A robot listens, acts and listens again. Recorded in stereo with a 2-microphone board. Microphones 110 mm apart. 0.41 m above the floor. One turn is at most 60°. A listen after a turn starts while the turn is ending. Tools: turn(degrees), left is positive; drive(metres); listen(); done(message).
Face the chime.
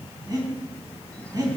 listen()
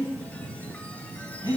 listen()
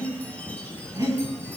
done("I can't make out a chime to turn to.")